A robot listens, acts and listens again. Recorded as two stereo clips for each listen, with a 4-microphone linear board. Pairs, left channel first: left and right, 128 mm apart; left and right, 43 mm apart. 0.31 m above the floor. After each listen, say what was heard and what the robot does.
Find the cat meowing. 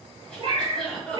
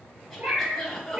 The cat meowing: about 40° right or 140° right. Turn 40° right.
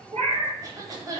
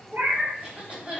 So it is at 110° right. Turn 110° right.
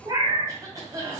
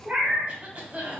The cat meowing is now 35° right. Turn 35° right.
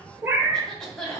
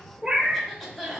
The cat meowing is now 20° right. Turn 20° right.
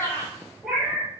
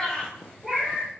Facing the cat meowing.